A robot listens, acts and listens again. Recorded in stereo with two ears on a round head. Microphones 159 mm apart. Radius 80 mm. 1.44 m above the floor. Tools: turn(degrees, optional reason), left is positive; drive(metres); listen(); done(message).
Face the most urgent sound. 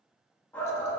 turn(degrees=30)
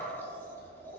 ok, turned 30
listen()
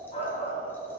turn(degrees=140, reason="So it is at 140° left.")
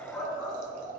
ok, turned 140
done("Found it: a shout, straight ahead, 2 to 4 m away.")